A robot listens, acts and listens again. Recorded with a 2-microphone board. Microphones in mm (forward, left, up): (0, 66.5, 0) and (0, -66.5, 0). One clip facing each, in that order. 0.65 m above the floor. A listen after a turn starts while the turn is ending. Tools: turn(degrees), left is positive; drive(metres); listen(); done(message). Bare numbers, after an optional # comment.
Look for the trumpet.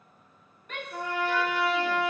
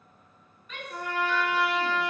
# The trumpet: about 60° right or 120° right.
turn(-60)
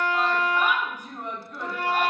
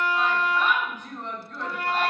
done("Facing the trumpet.")